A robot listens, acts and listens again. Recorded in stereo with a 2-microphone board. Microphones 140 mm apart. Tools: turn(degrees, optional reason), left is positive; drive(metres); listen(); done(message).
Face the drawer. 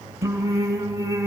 listen()
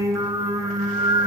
listen()
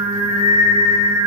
done("I can't make out a drawer, only singing.")